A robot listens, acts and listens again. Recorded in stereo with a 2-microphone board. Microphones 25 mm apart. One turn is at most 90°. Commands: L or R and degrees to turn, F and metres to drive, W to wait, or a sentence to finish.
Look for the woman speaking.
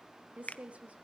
R65
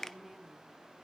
R10
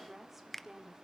R10
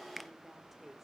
Facing the woman speaking.